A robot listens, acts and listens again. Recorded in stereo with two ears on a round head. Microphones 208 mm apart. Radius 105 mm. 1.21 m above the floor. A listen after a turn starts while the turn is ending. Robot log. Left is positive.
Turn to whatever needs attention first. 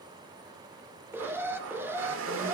cmd yaw -30
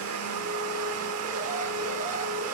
cmd idle
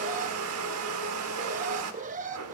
note: So it is at 145° right.
cmd yaw -145
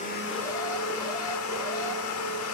cmd idle
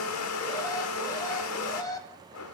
note: The alarm is now 15° left.
cmd yaw +15
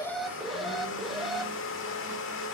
end: Facing the alarm, 1 to 2 m away.